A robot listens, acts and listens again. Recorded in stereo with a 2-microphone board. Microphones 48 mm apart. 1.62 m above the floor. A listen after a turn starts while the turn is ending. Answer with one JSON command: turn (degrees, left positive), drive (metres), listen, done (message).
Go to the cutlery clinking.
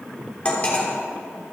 {"turn": 25}
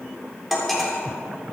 {"drive": 1.0}
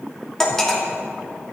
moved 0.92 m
{"turn": 10}
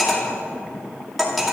{"drive": 1.0}
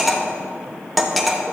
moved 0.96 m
{"drive": 1.0}
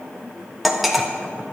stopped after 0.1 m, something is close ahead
{"done": "Arrived at the cutlery clinking, straight ahead."}